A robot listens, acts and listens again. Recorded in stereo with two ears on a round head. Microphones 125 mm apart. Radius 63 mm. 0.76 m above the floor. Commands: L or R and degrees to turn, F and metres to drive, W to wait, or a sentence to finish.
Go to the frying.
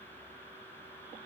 W
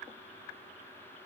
W
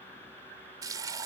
R30
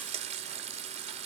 R120
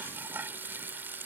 R15
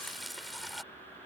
F1.0
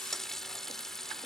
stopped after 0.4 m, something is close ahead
Blocked. The frying is further on, straight ahead.